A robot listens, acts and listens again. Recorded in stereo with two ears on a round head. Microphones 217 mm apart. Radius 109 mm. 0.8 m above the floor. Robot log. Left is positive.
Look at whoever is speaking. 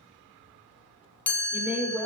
cmd yaw -30
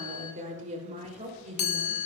note: So it is at 150° right.
cmd yaw -150
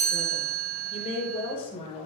note: The woman speaking is now 25° left.
cmd yaw +25
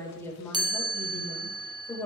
note: The woman speaking is now 10° left.
cmd yaw +10
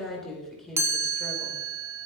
end: Facing the woman speaking.